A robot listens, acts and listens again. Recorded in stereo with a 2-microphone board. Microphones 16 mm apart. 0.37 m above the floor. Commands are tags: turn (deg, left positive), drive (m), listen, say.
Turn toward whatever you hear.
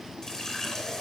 <turn deg="35"/>
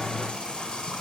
<turn deg="110"/>
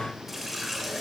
<turn deg="-10"/>
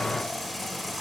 <say>Found it: a running tap, straight ahead, 2 to 4 m away.</say>